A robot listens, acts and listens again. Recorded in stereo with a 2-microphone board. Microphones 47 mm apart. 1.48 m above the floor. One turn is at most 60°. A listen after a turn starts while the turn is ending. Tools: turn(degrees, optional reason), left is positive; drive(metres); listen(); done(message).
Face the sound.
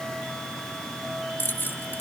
turn(degrees=55, reason="The keys jangling: about 55° left or 125° left.")
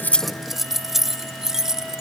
turn(degrees=-10, reason="So it is at 10° right.")
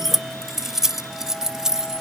turn(degrees=-15, reason="The keys jangling is now 15° right.")
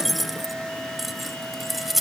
done("Facing the keys jangling.")